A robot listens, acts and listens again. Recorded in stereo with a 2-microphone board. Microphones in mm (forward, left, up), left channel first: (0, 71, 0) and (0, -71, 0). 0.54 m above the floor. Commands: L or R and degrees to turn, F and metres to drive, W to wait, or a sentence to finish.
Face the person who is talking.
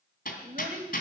R70
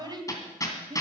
R30
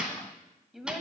Found it: a child speaking, straight ahead, 2 to 4 m away.